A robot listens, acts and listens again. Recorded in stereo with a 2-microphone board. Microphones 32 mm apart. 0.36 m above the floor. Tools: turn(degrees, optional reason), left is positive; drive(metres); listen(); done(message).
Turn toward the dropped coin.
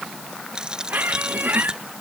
turn(degrees=-25, reason="The dropped coin: about 25° right or 155° right.")
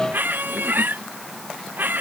listen()
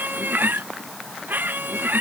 done("I heard a dropped coin, but can't make it out now. It was about straight ahead or 130° right.")